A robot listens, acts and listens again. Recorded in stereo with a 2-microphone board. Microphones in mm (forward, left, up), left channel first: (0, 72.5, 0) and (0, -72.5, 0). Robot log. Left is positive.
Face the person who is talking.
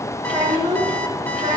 note: The child speaking: about 35° right or 145° right.
cmd yaw -35
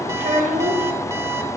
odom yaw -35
note: So it is at 115° right.
cmd yaw -115
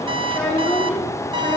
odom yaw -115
note: The child speaking is now 10° left.
cmd yaw +10
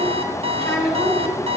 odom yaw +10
end: Found it: a child speaking, straight ahead, over 4 m away.